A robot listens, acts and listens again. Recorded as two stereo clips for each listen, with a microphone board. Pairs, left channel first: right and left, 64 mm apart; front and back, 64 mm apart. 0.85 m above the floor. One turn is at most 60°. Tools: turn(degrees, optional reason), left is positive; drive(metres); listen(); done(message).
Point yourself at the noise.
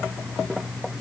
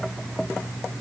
listen()
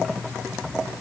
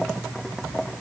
listen()
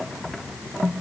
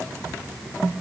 done("I can't make out anything.")